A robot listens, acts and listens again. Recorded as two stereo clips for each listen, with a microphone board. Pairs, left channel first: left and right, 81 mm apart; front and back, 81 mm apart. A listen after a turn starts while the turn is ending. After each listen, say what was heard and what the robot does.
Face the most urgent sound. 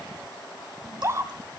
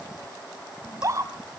The scream: 140° right. Turn 140° right.
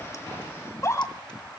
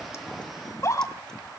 The scream is now 45° left. Turn 45° left.
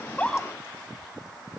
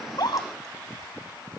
Keep listening.
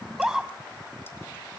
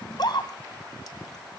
Found it: a scream, straight ahead, 2 to 4 m away.